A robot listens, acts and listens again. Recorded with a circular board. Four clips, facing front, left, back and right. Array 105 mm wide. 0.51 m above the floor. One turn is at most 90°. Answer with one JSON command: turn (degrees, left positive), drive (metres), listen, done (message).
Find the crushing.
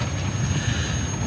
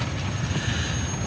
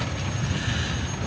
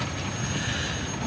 {"listen": true}
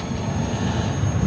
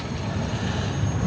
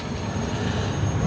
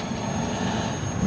{"listen": true}
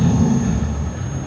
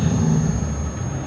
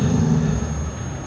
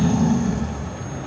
{"done": "I can't make out crushing to turn to."}